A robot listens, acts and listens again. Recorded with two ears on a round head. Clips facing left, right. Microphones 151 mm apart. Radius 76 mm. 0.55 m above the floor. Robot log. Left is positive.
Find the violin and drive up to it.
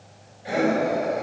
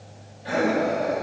cmd idle
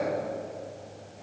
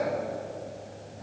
cmd idle
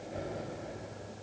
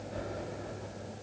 end: I can't make out a violin to turn to.